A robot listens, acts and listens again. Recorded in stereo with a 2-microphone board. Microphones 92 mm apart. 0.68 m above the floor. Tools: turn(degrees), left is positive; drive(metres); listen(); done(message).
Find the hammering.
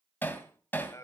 turn(degrees=20)
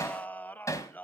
turn(degrees=145)
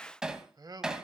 turn(degrees=-10)
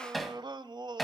done("Facing the hammering.")